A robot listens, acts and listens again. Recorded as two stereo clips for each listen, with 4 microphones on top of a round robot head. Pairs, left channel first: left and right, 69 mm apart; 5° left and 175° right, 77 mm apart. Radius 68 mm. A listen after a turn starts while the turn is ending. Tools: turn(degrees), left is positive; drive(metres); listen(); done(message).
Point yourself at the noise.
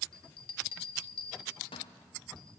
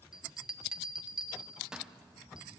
turn(degrees=105)
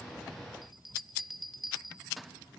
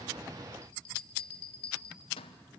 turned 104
done("Facing the bell, 1 to 2 m away.")